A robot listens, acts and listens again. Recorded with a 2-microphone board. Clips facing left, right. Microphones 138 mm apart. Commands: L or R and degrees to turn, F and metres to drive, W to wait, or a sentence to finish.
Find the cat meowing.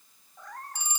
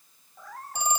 L30
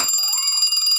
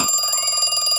W
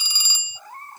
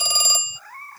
L160
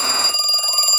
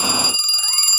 W
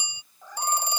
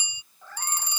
L15
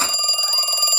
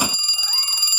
W
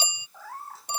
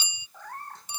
Found it: a cat meowing, straight ahead.